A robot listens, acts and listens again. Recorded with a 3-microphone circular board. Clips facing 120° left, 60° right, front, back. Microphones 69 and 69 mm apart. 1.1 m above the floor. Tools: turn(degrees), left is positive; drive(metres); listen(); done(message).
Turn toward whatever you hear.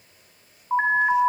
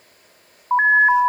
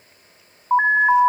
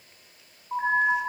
done("Found it: an alarm, straight ahead, 1 to 2 m away.")